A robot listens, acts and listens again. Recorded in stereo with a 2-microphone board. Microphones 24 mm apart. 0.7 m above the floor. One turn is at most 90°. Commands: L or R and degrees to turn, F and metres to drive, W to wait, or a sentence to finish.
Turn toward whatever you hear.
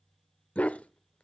L90
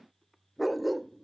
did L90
Found it: a dog barking, straight ahead.